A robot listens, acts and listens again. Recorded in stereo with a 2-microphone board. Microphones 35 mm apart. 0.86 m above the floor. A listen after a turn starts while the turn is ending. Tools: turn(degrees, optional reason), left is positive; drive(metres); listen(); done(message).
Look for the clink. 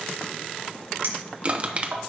turn(degrees=-75, reason="The clink: about 75° right or 105° right.")
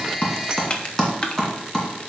listen()
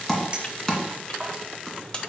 turn(degrees=-30, reason="So it is at 30° right.")
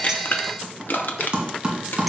listen()
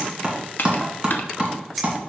done("Found it: a clink, straight ahead, 1 to 2 m away.")